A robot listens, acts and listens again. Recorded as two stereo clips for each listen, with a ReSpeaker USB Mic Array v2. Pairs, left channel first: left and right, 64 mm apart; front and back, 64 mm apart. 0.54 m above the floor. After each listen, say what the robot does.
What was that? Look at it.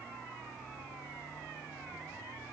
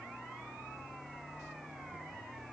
Keep listening.
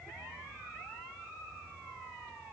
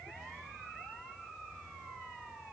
Keep listening.
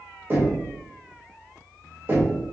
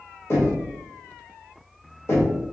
Turn 40° right.
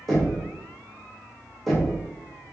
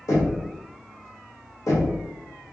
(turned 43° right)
Facing the knocking.